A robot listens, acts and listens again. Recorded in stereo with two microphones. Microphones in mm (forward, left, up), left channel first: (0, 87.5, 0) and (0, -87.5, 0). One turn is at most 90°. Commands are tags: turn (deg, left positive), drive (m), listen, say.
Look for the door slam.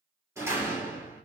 <turn deg="-15"/>
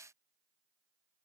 <listen/>
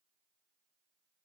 <say>I heard a door slam, but can't make it out now. It was about straight ahead or 150° right.</say>